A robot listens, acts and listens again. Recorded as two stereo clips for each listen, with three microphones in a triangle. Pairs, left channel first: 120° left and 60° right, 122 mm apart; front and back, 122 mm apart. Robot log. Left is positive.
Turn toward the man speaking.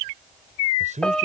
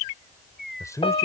note: The man speaking: 65° right.
cmd yaw -65
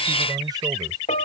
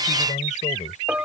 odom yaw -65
cmd idle
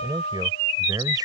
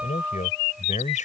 end: Facing the man speaking.